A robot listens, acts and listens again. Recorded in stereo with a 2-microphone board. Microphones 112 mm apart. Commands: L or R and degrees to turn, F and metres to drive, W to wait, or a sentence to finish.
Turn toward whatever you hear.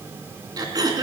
R35
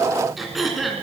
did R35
Found it: throat clearing, straight ahead.